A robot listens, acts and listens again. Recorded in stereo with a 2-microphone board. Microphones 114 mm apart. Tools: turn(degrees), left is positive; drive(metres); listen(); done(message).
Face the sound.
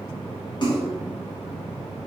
turn(degrees=45)
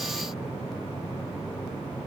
listen()
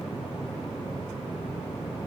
done("I heard a splash, but can't make it out now. It was about straight ahead or 90° left.")